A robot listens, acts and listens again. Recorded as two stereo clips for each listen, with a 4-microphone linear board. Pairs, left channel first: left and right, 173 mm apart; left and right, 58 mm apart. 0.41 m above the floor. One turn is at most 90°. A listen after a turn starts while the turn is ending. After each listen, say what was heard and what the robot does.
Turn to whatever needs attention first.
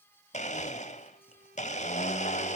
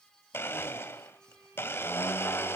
Keep listening.
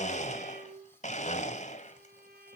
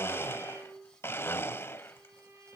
Keep listening.
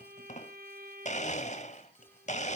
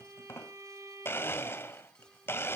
I can't make out anything urgent to turn to.